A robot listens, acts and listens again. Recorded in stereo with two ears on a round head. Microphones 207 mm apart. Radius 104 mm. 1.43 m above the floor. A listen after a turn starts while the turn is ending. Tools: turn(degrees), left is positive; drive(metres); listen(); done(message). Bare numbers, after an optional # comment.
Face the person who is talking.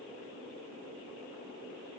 listen()
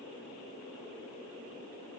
listen()
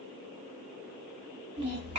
# The child speaking: about 30° right or 150° right.
turn(-30)
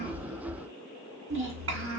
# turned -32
# So it is at 110° right.
turn(-110)
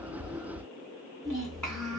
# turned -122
# The child speaking is now 10° left.
turn(10)
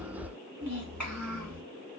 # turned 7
done("Found it: a child speaking, straight ahead.")